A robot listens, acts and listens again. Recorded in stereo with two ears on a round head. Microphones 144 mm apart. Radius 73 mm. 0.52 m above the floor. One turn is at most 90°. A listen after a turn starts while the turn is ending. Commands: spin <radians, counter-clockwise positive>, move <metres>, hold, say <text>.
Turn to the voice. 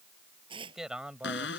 spin -0.52
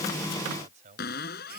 spin -1.57
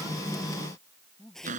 spin 0.26
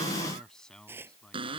say Facing the man speaking.